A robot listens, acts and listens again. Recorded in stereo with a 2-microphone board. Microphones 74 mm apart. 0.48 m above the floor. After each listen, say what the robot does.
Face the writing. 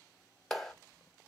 Keep listening.
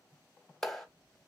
Keep listening.
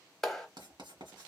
Turn 90° right.
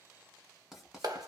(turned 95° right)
Facing the writing, 1 to 2 m away.